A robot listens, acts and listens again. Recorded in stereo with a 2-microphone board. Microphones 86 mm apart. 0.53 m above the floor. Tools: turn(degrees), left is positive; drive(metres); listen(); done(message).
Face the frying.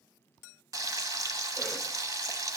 turn(degrees=-45)
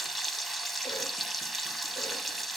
done("Facing the frying.")